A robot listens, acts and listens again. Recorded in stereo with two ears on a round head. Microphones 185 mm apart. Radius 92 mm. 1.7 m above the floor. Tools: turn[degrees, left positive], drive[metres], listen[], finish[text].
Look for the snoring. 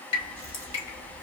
Action: listen[]
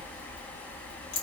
Action: listen[]
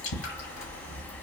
Action: finish[I can't make out snoring to turn to.]